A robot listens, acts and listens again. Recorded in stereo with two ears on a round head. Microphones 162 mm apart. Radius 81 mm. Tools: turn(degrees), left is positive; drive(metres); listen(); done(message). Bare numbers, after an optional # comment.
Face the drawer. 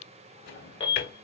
# The drawer: about 65° left or 115° left.
turn(65)
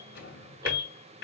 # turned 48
# So it is at 60° left.
turn(60)
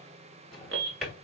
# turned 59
done("Found it: a drawer, straight ahead, 2 to 4 m away.")